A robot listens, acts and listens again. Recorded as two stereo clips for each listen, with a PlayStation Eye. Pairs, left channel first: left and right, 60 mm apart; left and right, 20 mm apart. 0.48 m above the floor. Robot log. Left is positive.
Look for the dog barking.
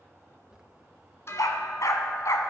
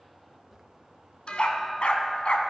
note: The dog barking: about 60° left or 120° left.
cmd yaw +60
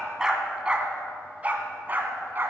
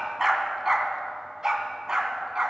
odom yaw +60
note: So it is at 35° right.
cmd yaw -35
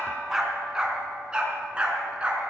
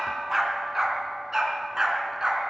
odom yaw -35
note: The dog barking is now 20° right.
cmd yaw -20
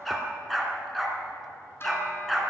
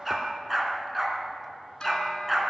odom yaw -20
end: Facing the dog barking, 2 to 4 m away.